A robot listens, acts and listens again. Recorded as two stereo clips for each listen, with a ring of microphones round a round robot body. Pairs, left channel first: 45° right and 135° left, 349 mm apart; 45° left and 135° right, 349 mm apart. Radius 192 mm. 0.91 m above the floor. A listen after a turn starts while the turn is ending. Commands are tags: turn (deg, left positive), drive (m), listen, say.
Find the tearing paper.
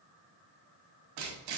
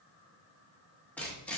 <turn deg="130"/>
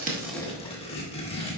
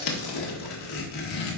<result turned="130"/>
<turn deg="30"/>
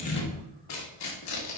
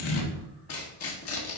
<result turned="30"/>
<say>Found it: tearing paper, straight ahead, 1 to 2 m away.</say>